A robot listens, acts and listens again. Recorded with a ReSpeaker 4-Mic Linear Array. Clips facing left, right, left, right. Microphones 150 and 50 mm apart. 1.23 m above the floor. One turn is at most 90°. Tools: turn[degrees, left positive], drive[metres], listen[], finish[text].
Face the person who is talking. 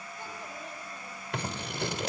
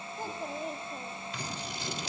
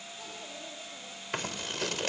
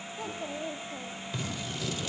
Thought: The child speaking: about 45° right or 135° right.
Action: turn[-45]
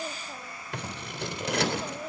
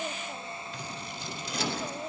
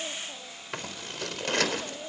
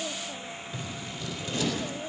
Action: finish[Facing the child speaking.]